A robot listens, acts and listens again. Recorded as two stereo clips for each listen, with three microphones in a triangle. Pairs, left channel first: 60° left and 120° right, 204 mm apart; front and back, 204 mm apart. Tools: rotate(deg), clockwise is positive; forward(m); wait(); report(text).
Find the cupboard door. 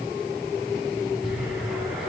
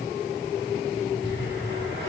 wait()
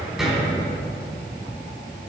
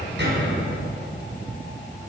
rotate(-150)
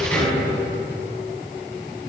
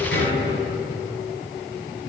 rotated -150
rotate(25)
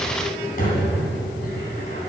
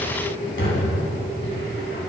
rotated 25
rotate(-15)
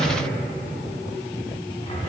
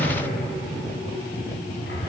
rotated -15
report("Facing the cupboard door, 2 to 4 m away.")